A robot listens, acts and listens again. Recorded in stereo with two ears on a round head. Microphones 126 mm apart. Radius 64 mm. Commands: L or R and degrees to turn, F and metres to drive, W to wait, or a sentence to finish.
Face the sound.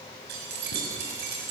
R90
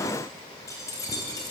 L25
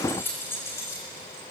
L20
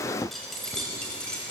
L10
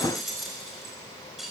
Found it: keys jangling, straight ahead.